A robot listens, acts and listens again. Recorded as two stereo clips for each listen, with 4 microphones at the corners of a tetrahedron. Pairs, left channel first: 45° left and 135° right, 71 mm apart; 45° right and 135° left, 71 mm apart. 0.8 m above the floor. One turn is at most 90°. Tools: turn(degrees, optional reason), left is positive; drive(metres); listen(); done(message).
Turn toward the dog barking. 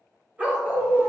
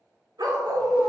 turn(degrees=90, reason="The dog barking: 160° left.")
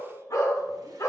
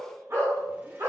turn(degrees=90, reason="The dog barking is now 90° left.")
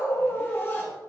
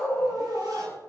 turn(degrees=15, reason="The dog barking is now 15° left.")
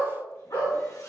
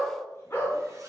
turn(degrees=10, reason="The dog barking is now 10° left.")
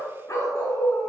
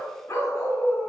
done("Found it: a dog barking, straight ahead.")